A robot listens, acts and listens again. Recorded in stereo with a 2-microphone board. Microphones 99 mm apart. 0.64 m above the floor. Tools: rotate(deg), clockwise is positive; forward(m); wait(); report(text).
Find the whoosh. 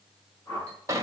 rotate(-35)
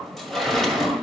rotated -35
wait()
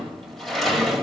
wait()
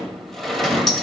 report("I heard a whoosh, but can't make it out now. It was about straight ahead or 110° left.")